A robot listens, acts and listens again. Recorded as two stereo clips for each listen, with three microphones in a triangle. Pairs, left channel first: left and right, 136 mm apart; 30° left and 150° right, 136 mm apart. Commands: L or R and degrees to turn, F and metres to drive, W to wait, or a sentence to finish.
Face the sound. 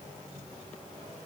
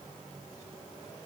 W
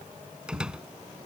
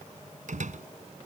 R175
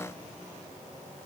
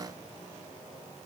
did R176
Facing where the door slam came from. I can't hear it now.